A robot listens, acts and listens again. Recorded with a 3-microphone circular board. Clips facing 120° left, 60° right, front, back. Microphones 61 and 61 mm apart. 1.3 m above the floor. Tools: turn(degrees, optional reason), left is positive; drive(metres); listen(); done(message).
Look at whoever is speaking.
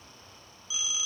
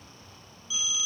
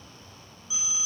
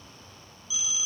listen()
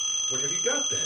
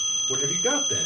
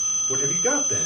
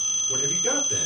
turn(degrees=-50, reason="The man speaking: 50° right.")
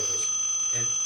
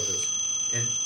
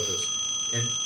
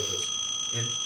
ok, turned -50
listen()
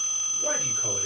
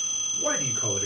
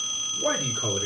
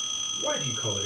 turn(degrees=-10, reason="The man speaking is now 10° right.")
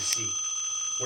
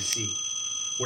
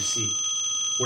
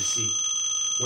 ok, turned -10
done("Facing the man speaking.")